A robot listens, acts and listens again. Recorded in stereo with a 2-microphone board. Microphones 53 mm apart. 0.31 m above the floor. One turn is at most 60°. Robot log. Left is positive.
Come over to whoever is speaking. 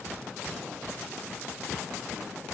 cmd idle
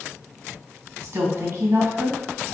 note: The woman speaking: about 55° right or 125° right.
cmd yaw -55
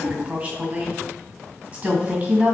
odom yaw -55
note: So it is at 40° right.
cmd yaw -40
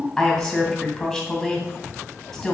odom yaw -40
cmd fwd 1.0
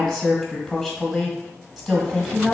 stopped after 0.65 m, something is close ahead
end: I am next to the woman speaking.